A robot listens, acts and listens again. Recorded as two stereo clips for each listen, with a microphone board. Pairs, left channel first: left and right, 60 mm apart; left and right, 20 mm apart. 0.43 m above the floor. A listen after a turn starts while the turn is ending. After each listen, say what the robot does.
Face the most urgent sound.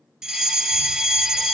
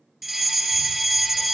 Turn 30° right.
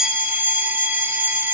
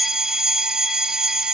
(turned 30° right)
Turn 140° right.
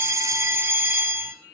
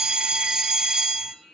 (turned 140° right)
Turn 45° right.
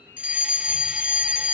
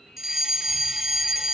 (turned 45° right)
Turn 15° right.
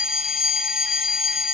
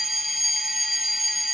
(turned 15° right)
Facing the fire alarm, 2 to 4 m away.